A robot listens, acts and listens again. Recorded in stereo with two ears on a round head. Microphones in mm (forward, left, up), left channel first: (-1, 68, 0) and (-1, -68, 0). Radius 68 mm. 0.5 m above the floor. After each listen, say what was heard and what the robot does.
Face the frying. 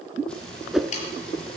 Turn 30° left.
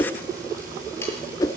So it is at 25° right. Turn 25° right.
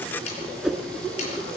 Keep listening.
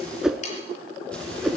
Facing the frying.